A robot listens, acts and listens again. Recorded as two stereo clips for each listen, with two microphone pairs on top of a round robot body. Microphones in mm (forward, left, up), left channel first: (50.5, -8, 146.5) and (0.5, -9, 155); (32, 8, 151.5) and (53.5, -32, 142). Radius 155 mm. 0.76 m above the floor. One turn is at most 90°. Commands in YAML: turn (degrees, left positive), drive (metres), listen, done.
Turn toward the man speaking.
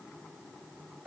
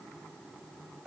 listen: true
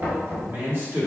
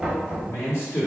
turn: 90
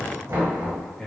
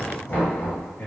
turn: 65
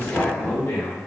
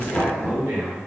turn: -25
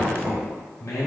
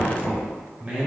done: "Found it: a man speaking, straight ahead."